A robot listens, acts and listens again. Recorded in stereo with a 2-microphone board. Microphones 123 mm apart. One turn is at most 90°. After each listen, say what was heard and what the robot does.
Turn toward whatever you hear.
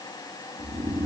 The snoring: about 50° right or 130° right. Turn 50° right.
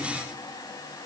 Keep listening.
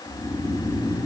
Found it: snoring, straight ahead.